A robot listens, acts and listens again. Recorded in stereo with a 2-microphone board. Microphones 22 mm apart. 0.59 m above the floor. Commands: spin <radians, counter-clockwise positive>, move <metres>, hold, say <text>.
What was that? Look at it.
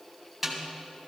spin -0.52
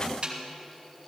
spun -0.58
spin -2.44
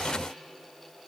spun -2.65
spin 0.17
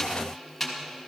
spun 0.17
say Found it: a snare drum, straight ahead.